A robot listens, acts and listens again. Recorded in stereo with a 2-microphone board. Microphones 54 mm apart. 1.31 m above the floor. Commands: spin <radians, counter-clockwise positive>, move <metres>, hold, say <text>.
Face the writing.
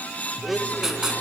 spin -0.52
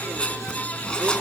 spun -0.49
spin 0.35
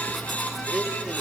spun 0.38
say Facing the writing, 2 to 4 m away.